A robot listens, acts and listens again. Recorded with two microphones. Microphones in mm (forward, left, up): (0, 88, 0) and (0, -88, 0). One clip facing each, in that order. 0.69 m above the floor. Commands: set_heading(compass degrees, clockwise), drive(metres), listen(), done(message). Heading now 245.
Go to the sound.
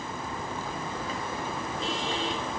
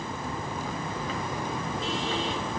listen()
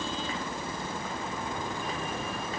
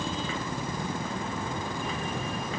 listen()
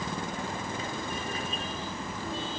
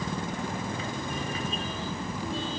done("I can't make out anything.")